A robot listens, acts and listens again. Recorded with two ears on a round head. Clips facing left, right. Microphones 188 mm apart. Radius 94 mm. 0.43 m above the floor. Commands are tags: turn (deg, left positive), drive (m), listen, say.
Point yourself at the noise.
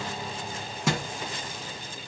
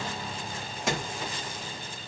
<turn deg="90"/>
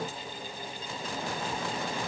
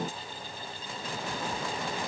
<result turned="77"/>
<turn deg="15"/>
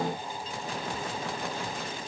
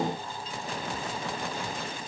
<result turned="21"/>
<turn deg="-10"/>
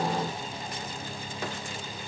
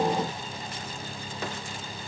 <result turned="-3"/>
<say>I heard a thud from this way, but can't make it out now.</say>